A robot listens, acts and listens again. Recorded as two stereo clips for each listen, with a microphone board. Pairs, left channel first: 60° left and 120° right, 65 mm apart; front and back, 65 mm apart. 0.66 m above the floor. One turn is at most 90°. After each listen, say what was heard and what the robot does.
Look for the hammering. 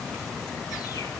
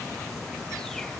Keep listening.
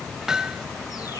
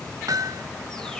The hammering: 160° left. Turn 90° left.
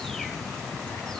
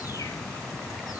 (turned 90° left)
The hammering is now 50° left. Turn 50° left.
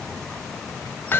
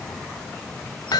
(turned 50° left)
Facing the hammering, 1 to 2 m away.